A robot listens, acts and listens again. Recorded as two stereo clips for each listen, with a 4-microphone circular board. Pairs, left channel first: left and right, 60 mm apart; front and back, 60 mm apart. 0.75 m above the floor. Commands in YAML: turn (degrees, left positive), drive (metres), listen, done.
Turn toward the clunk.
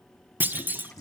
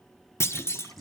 turn: -35
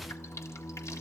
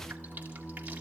done: "Facing where the clunk came from. I can't hear it now."